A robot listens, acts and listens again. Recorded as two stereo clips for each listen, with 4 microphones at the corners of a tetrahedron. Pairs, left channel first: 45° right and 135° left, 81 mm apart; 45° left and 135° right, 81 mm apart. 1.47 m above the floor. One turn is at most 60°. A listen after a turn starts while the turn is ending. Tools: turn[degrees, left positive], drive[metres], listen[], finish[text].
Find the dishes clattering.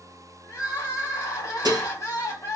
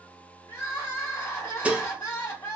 Thought: The dishes clattering: 155° left.
Action: turn[60]
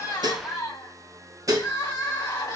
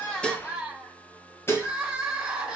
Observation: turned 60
Thought: The dishes clattering is now 100° left.
Action: turn[60]
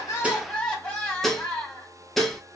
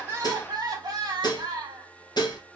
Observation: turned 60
Thought: The dishes clattering is now 40° left.
Action: turn[40]
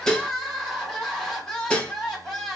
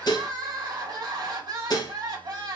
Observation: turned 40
Thought: The dishes clattering is now 30° left.
Action: turn[30]
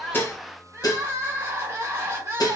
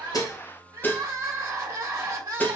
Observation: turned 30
Thought: The dishes clattering is now 15° right.
Action: turn[-15]
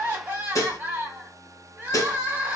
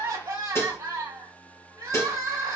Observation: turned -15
Action: finish[Facing the dishes clattering, under 1 m away.]